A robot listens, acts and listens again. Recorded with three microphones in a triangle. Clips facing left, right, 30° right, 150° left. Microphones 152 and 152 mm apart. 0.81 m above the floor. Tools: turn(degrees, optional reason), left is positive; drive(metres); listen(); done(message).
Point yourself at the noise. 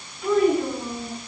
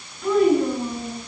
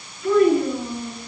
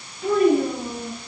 turn(degrees=175, reason="The child speaking: 175° left.")
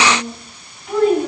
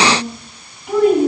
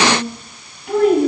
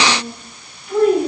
turn(degrees=-10, reason="The child speaking is now 10° right.")
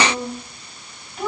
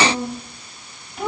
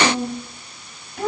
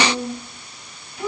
done("Facing the child speaking.")